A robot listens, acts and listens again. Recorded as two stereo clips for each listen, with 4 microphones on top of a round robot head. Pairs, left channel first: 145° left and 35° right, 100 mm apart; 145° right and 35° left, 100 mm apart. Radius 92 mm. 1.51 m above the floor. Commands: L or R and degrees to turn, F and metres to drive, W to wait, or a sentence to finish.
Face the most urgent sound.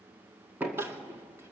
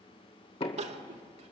L35
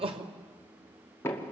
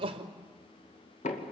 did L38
Facing the crying.